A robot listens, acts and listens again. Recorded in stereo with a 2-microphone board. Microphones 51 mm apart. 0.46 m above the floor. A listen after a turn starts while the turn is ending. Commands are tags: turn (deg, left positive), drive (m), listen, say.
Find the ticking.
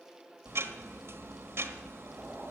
<turn deg="-60"/>
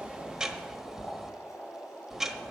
<turn deg="-10"/>
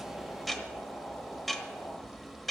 <say>Found it: ticking, straight ahead, 1 to 2 m away.</say>